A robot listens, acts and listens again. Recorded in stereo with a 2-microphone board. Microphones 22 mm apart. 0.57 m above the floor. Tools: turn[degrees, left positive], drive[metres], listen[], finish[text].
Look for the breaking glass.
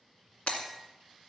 Thought: The breaking glass: about 70° left or 110° left.
Action: turn[70]
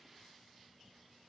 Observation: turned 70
Action: listen[]
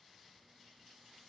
Action: finish[I heard breaking glass, but can't make it out now. It was about straight ahead or 40° left.]